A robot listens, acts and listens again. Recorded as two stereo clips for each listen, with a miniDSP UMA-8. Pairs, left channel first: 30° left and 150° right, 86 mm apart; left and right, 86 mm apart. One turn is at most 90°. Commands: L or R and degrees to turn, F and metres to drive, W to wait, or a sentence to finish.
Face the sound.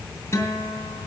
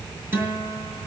R30
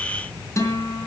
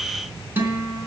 R25
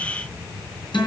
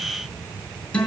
L10
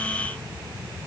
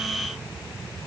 W
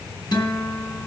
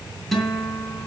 Facing the guitar, 2 to 4 m away.